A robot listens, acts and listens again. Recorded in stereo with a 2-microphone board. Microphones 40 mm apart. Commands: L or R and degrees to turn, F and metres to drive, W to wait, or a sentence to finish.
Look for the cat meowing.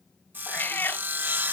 L60
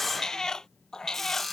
L20
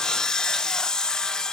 W
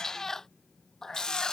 L15
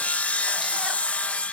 W
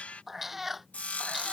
Found it: a cat meowing, straight ahead.